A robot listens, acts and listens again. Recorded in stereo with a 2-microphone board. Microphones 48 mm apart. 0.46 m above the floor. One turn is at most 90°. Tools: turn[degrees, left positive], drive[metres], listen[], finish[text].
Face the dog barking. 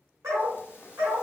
Action: turn[-90]
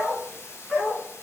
Thought: So it is at 25° right.
Action: turn[-25]
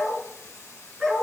Thought: The dog barking is now 10° right.
Action: turn[-10]
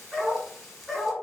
Action: finish[Found it: a dog barking, straight ahead.]